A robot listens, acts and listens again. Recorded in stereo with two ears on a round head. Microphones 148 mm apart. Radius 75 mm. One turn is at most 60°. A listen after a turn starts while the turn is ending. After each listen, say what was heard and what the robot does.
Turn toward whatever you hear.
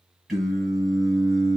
Turn 30° left.
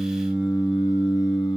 So it is at 150° left. Turn 60° left.
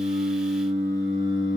The singing is now 70° left. Turn 60° left.
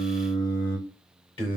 The singing is now 30° left. Turn 30° left.
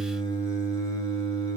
The singing is now 25° left. Turn 25° left.
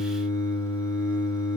The singing is now 20° left. Turn 20° left.
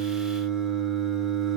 Facing the singing.